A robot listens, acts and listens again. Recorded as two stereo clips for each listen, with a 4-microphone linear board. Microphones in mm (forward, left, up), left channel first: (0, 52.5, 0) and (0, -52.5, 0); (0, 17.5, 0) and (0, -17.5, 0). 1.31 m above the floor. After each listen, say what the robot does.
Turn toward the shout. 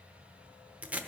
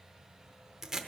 Keep listening.
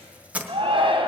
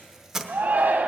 Turn 55° right.
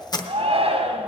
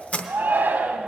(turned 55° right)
Turn 70° right.
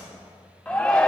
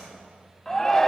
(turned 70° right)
Turn 10° left.
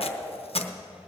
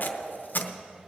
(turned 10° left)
Keep listening.
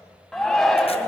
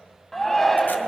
Found it: a shout, straight ahead, 1 to 2 m away.